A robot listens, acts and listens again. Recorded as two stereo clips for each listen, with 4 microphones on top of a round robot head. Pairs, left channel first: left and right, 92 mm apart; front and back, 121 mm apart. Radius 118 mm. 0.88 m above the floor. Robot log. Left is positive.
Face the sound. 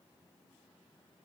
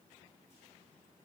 cmd idle
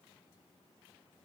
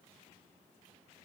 cmd idle
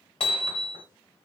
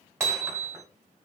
note: The hammering: 105° left.
cmd yaw +105
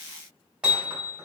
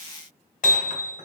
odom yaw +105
note: The hammering is now 10° right.
cmd yaw -10
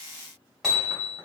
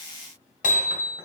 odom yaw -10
end: Found it: hammering, straight ahead, 2 to 4 m away.